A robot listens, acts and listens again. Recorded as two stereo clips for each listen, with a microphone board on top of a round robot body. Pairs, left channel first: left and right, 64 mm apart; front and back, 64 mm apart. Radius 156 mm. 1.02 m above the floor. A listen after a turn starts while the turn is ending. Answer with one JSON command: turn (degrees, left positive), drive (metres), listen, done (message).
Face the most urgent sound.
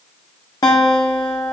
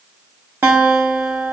{"listen": true}
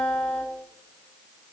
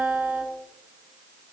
{"listen": true}
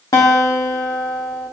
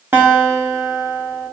{"done": "I can't make out anything urgent, only a guitar."}